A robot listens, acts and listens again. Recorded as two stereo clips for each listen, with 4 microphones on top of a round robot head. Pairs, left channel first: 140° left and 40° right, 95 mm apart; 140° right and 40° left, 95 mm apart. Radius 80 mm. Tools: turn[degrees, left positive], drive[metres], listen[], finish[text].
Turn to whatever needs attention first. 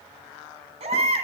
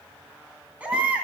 Thought: The baby crying: 40° right.
Action: turn[-40]
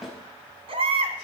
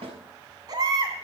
Thought: The baby crying is now 10° right.
Action: turn[-10]
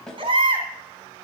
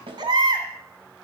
Action: finish[Found it: a baby crying, straight ahead.]